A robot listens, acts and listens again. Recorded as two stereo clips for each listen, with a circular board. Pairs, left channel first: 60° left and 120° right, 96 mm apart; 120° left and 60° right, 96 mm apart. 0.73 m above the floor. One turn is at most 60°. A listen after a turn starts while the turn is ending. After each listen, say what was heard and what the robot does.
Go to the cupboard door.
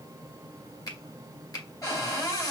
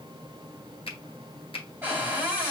Drive 1.0 m forward.
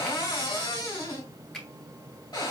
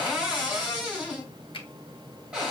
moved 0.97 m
The cupboard door is now 15° left. Turn 15° left.
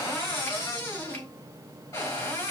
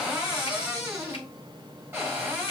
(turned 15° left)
Drive 1.0 m forward.
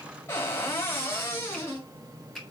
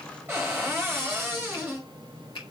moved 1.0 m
Drive 1.0 m forward.
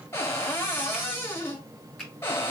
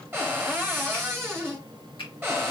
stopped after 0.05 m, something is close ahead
I am next to the cupboard door.